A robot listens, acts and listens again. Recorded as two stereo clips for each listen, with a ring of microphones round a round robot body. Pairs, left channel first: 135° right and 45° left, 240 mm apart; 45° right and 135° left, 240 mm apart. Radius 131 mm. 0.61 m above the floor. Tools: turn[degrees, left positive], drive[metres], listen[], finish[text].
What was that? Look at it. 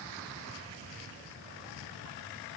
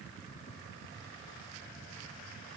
Action: listen[]
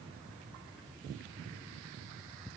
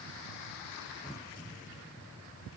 Action: listen[]
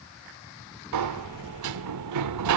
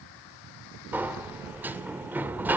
Thought: The sliding door: 50° left.
Action: turn[50]
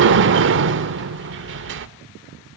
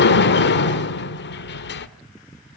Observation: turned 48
Action: finish[Found it: a sliding door, straight ahead, 1 to 2 m away.]